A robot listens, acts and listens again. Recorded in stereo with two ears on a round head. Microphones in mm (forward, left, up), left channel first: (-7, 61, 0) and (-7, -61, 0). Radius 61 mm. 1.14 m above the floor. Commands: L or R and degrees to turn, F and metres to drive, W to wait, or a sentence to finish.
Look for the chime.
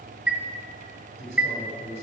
R30
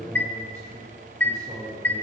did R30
L15
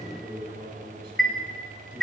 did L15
Facing the chime, 1 to 2 m away.